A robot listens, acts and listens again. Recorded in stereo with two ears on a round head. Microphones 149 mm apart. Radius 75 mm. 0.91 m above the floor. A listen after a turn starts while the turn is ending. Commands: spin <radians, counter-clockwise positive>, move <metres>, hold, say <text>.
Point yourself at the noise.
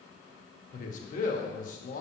spin 0.87
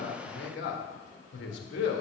spin 1.40
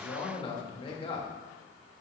spin 0.52
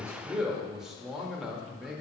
say Found it: a man speaking, straight ahead, 1 to 2 m away.